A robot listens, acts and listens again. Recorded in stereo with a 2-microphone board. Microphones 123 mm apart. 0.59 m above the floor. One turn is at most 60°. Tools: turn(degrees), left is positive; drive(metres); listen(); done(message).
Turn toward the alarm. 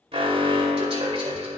turn(degrees=-55)
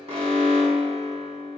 turn(degrees=-60)
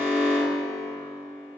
turn(degrees=-20)
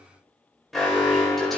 done("Facing the alarm, 2 to 4 m away.")